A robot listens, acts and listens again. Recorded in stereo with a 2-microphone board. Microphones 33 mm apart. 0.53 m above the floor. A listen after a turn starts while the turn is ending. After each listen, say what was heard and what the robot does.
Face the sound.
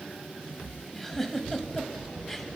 Turn 30° left.
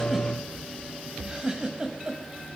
So it is at 20° right. Turn 20° right.
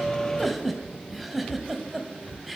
Found it: a giggle, straight ahead.